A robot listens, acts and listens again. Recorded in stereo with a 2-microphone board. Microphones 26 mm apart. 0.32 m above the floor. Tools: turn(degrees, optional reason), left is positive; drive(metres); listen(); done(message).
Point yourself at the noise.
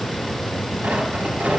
turn(degrees=-90)
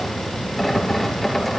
turn(degrees=10, reason="So it is at 10° left.")
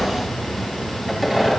done("Found it: tearing paper, straight ahead, over 4 m away.")